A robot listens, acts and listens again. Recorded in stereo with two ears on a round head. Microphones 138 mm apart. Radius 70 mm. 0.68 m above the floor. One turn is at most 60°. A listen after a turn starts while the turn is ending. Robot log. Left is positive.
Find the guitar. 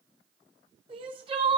cmd idle
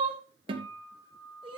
note: The guitar: about 30° right or 150° right.
cmd yaw -30
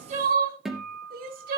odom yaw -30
end: Found it: a guitar, straight ahead.